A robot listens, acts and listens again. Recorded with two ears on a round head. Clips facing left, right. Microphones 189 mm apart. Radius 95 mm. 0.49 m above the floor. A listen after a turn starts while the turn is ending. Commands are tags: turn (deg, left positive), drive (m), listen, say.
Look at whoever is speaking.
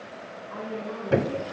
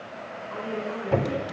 <turn deg="-40"/>
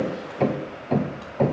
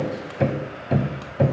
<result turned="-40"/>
<listen/>
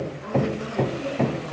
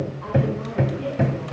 <listen/>
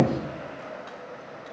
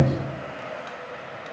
<say>I heard a woman speaking, but can't make it out now. It was about straight ahead or 100° right.</say>